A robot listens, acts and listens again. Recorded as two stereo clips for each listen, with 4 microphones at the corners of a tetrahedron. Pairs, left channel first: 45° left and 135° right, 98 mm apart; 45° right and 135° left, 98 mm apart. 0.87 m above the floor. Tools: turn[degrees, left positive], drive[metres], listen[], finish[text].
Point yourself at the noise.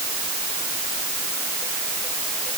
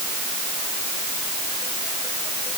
Action: listen[]
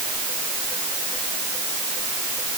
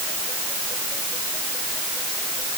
Action: listen[]
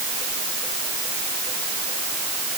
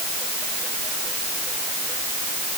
Action: finish[I can't make out anything to turn to.]